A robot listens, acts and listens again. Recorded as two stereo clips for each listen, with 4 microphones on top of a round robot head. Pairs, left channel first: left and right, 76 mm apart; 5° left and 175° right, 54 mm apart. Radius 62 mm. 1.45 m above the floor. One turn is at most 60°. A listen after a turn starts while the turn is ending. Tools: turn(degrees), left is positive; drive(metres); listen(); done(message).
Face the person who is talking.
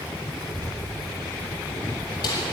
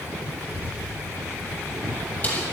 turn(degrees=-55)
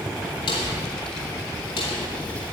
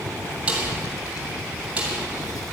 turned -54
turn(degrees=20)
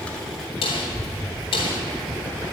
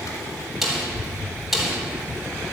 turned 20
turn(degrees=10)
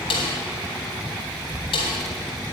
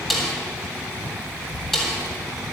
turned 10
done("Found it: a child speaking, straight ahead, 2 to 4 m away.")